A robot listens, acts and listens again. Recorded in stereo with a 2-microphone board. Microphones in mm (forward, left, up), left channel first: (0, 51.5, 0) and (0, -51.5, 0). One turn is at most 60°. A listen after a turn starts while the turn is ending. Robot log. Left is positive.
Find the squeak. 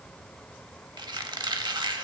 note: The squeak: about 45° right or 135° right.
cmd yaw -45
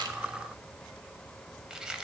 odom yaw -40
note: So it is at 10° right.
cmd yaw -10
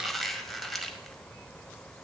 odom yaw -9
end: Found it: a squeak, straight ahead.